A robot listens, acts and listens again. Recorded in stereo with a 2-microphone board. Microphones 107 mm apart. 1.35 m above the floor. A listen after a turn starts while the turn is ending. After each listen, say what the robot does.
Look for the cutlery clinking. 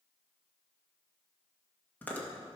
Keep listening.
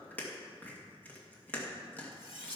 Turn 70° left.
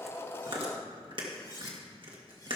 Turn 40° left.
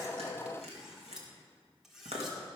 Facing the cutlery clinking.